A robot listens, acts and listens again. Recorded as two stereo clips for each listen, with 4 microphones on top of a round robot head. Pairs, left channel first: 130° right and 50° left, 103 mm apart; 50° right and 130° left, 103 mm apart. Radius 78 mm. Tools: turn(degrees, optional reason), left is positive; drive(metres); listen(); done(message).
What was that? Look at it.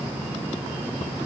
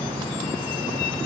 listen()
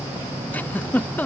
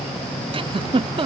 turn(degrees=155, reason="The giggle: 155° left.")
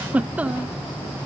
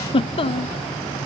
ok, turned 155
turn(degrees=-25, reason="The giggle is now 25° right.")
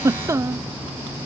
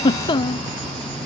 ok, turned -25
turn(degrees=-10, reason="The giggle is now 10° right.")
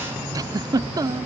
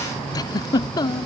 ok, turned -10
done("Found it: a giggle, straight ahead.")